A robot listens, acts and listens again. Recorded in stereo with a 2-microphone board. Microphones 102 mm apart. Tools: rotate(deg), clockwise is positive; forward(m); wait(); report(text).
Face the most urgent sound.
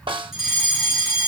rotate(30)
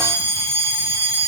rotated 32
rotate(145)
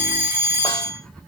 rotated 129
rotate(15)
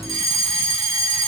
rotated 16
report("Found it: a fire alarm, straight ahead.")